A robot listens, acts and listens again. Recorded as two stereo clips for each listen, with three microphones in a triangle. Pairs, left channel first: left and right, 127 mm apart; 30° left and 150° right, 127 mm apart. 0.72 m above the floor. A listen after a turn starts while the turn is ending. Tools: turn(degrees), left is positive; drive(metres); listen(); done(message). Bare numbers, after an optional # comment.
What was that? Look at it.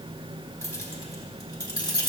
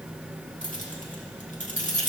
# The keys jangling: 40° left.
turn(40)
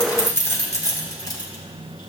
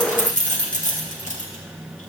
# The keys jangling is now 35° left.
turn(35)
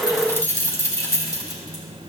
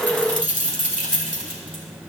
# The keys jangling is now 30° left.
turn(30)
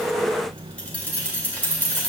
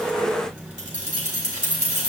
# The keys jangling is now 10° left.
turn(10)
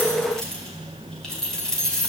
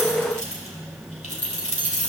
done("Facing the keys jangling, 2 to 4 m away.")